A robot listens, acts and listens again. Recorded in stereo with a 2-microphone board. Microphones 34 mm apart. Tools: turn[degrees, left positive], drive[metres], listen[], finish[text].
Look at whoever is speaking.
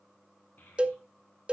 Thought: The child speaking: about 65° left or 115° left.
Action: turn[65]
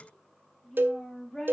Action: finish[Found it: a child speaking, straight ahead, over 4 m away.]